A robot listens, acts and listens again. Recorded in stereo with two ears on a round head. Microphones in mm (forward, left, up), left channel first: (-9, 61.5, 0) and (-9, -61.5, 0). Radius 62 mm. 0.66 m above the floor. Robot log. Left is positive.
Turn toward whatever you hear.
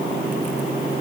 cmd idle
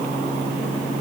cmd idle
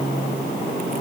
end: I can't make out anything.